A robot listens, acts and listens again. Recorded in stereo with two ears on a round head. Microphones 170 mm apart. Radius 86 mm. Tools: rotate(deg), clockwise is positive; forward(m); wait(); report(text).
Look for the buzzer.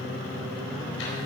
wait()
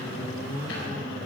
wait()
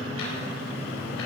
report("I can't make out a buzzer to turn to.")